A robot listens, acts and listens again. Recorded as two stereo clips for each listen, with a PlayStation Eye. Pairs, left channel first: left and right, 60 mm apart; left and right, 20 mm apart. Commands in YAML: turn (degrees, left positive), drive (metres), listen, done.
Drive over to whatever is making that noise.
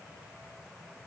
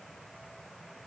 listen: true
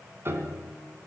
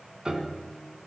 turn: -45
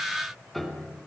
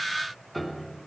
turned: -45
drive: 1.0
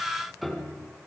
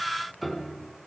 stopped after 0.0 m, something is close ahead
done: "Something is in my way. I am facing the piano but have not reached it."